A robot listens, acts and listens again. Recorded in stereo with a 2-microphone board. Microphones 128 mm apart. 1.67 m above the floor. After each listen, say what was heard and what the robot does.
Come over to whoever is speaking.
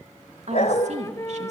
The woman speaking: about 60° right or 120° right. Turn 60° right.
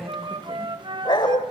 Keep listening.
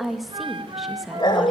Drive 1.0 m forward.
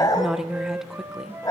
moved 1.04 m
Drive 1.0 m forward.
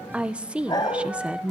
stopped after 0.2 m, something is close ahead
The woman speaking is now 10° right. Turn 10° right.
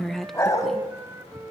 Arrived at the woman speaking, straight ahead.